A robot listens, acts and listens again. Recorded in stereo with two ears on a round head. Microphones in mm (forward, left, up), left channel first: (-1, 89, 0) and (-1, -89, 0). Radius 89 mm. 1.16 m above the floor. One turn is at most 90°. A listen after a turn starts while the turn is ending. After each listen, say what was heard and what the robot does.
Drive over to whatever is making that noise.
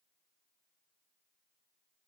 Keep listening.
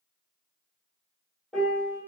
Turn 30° left.
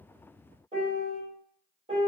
So it is at 30° right. Turn 30° right.
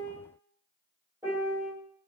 The piano is now 15° right. Turn 15° right.
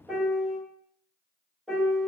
Drive 1.0 m forward.
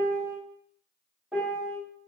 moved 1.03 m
Drive 1.0 m forward.
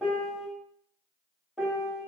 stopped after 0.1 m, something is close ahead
I am next to the piano.